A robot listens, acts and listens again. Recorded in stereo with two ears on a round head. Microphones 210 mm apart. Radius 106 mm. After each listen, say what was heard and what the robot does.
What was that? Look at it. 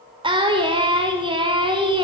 The singing: about 20° right or 160° right. Turn 20° right.
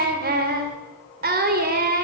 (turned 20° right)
So it is at 140° right. Turn 140° right.
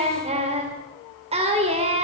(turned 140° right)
The singing is now 25° right. Turn 25° right.
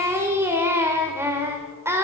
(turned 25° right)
The singing is now 10° right. Turn 10° right.
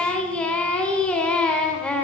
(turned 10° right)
Facing the singing, 2 to 4 m away.